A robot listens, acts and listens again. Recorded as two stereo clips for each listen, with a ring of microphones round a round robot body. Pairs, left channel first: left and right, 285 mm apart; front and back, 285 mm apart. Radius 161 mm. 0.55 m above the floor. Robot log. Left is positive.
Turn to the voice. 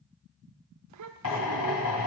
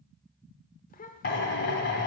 note: The child speaking: 60° right.
cmd yaw -60
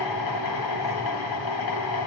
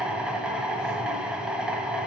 cmd idle
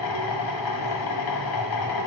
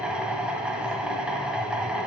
cmd idle
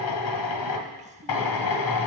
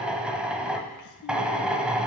note: The child speaking is now 20° right.
cmd yaw -20
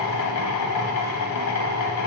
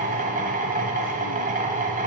cmd idle
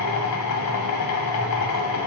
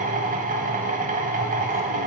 cmd idle
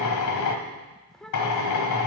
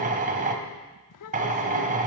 end: Facing the child speaking.